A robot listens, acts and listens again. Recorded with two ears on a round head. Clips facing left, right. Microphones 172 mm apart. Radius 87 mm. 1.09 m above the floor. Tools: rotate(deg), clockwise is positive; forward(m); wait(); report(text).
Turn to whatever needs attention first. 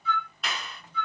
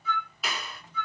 wait()
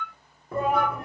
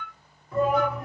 rotate(-45)
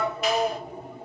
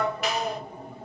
report("Found it: a shout, straight ahead, under 1 m away.")